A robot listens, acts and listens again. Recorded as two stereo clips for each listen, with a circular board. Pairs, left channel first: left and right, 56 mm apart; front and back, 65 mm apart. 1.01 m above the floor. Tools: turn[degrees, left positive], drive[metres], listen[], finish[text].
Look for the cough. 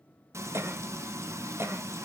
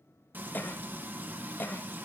Thought: The cough: 55° right.
Action: turn[-55]
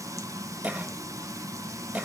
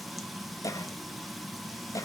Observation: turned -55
Thought: The cough is now 25° right.
Action: turn[-25]
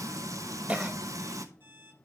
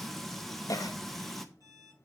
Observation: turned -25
Thought: The cough is now 25° right.
Action: turn[-25]
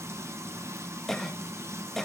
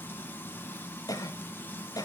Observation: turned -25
Action: finish[Found it: a cough, straight ahead.]